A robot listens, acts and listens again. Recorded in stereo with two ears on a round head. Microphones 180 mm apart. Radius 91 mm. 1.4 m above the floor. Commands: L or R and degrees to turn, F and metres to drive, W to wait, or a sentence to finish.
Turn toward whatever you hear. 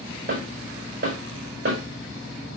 R50
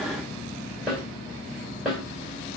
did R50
Found it: a snare drum, straight ahead.